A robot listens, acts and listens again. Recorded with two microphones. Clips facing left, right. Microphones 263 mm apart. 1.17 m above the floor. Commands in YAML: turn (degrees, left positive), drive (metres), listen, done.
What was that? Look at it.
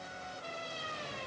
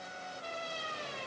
listen: true
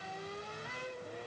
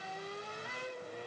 listen: true
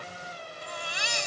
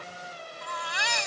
turn: -75
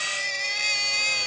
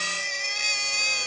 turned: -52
turn: -55
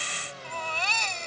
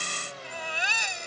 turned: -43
turn: -10
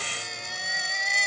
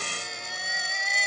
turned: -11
done: "Found it: a baby crying, straight ahead."